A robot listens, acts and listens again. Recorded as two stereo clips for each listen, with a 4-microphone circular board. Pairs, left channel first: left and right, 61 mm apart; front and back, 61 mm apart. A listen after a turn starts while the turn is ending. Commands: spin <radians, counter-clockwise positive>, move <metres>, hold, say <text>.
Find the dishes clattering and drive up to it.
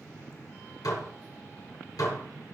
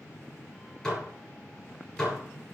spin 1.40
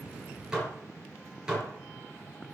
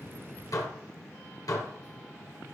spin -0.17
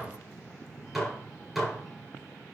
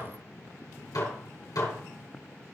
move 1.0
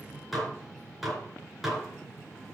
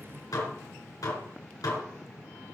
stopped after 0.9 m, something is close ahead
say Blocked. The dishes clattering is further on, straight ahead.